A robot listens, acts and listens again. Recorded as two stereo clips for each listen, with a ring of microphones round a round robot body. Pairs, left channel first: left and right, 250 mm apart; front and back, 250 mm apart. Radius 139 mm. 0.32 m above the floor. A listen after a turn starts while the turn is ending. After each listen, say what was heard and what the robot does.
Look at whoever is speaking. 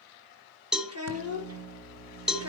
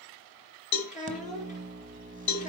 The child speaking: 60° right. Turn 60° right.
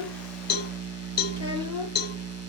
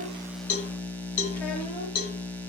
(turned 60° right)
Keep listening.
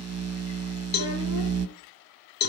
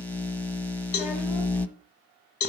Keep listening.
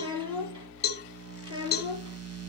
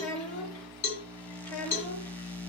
The child speaking is now 20° right. Turn 20° right.
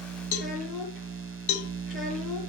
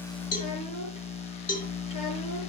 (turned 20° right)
Keep listening.
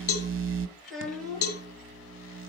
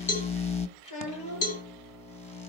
Found it: a child speaking, straight ahead, over 4 m away.